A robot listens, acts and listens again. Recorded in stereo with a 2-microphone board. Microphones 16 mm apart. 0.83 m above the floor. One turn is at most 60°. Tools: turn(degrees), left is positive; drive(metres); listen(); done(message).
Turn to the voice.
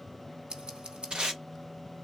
listen()
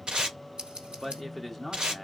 turn(degrees=-30)
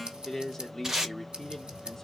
turn(degrees=20)
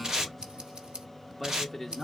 turn(degrees=10)
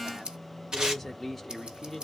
done("Found it: a man speaking, straight ahead.")